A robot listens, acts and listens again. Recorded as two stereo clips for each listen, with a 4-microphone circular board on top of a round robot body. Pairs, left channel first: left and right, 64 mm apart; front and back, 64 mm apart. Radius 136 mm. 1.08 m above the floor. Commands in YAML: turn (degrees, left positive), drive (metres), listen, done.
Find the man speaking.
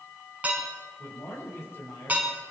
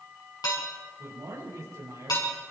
turn: 140
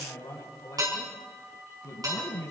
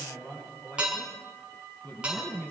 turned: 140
turn: 65
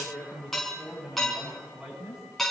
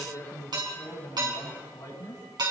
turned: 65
done: "Found it: a man speaking, straight ahead."